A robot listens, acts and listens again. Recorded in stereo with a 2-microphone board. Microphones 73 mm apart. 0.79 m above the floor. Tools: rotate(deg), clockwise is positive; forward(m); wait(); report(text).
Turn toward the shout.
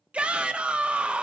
rotate(15)
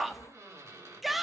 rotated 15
report("Facing the shout, 1 to 2 m away.")